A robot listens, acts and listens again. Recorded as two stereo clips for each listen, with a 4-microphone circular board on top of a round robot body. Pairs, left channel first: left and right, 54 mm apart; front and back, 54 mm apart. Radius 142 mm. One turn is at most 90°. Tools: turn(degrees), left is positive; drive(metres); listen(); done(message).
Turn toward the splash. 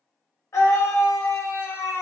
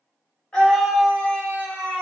listen()
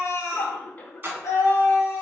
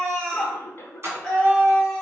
turn(degrees=-90)
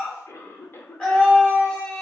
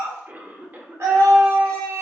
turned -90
turn(degrees=-50)
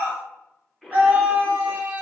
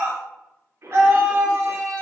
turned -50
done("I heard a splash from this way, but can't make it out now.")